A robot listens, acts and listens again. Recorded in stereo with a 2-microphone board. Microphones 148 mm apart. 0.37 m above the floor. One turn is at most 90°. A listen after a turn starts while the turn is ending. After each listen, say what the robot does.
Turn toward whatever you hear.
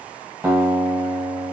Turn 20° right.
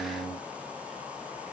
Turn 90° right.
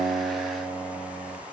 Turn 35° right.
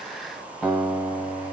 Found it: a guitar, straight ahead, 1 to 2 m away.